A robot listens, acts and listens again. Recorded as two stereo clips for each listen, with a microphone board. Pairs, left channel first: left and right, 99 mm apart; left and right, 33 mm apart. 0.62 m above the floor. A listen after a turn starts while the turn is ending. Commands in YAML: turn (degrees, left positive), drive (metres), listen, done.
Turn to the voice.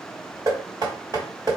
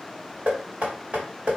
listen: true
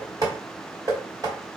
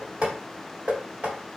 listen: true
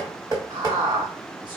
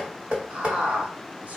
turn: -50
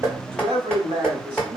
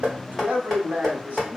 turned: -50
turn: -70
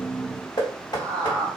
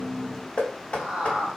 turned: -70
turn: -35
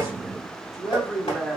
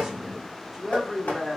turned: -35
done: "Facing the man speaking."